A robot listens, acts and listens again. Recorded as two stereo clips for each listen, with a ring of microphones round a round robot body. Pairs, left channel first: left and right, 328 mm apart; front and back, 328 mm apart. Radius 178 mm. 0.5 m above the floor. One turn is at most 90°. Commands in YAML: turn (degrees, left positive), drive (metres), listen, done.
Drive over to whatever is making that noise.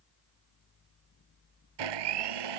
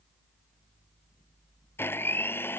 turn: -85
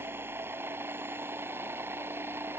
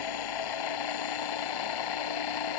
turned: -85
drive: 1.0
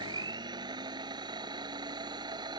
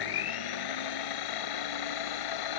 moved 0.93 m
turn: -10
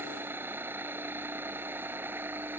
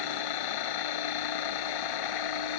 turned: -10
drive: 1.0
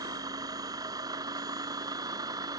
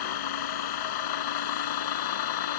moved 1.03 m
turn: -10
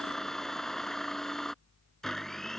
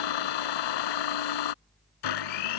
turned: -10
drive: 1.0
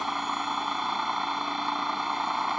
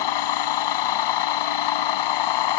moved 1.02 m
drive: 1.0
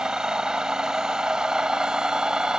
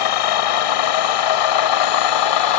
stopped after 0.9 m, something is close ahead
done: "I am next to the blender."